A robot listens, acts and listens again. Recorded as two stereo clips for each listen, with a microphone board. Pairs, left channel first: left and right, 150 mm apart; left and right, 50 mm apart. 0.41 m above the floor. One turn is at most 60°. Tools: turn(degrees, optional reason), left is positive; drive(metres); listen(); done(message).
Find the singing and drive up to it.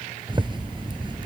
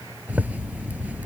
listen()
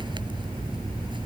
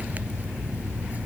listen()
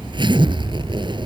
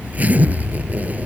done("I can't make out singing, only a zipper.")